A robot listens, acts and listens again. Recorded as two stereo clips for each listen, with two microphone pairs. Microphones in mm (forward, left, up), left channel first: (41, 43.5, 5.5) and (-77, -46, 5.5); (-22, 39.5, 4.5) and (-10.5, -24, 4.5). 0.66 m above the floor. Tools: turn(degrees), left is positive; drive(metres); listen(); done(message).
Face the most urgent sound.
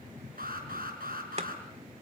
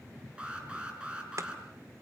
turn(degrees=-155)
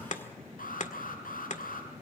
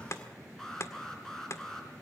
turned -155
turn(degrees=20)
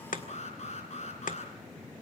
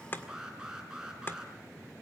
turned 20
done("Facing the alarm.")